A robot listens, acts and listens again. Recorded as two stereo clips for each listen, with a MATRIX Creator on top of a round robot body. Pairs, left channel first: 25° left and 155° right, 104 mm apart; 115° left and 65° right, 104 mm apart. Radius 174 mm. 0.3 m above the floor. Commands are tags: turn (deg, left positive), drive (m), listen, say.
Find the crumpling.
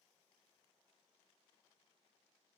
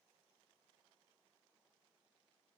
<listen/>
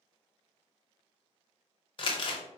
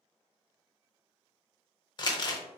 <turn deg="65"/>
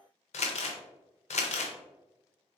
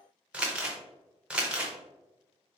<turn deg="15"/>
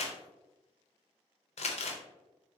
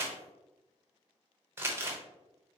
<say>Found it: crumpling, straight ahead.</say>